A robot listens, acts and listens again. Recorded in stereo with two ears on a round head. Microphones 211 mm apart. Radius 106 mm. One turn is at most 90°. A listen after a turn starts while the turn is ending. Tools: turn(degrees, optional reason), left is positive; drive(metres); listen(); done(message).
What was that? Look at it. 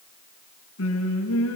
turn(degrees=70, reason="The singing: about 70° left or 110° left.")
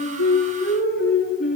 turn(degrees=35, reason="So it is at 35° left.")
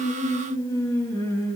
turn(degrees=10, reason="The singing is now 10° left.")
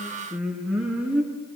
done("Facing the singing.")